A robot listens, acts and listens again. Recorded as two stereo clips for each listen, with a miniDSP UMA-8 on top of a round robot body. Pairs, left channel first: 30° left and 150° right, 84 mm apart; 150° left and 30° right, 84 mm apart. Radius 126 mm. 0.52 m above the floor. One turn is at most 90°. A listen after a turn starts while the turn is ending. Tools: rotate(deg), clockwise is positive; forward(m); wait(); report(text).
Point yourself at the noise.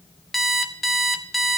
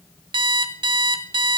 rotate(60)
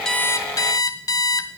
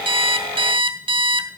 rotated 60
rotate(15)
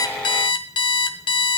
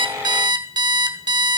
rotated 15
report("Found it: an alarm clock, straight ahead.")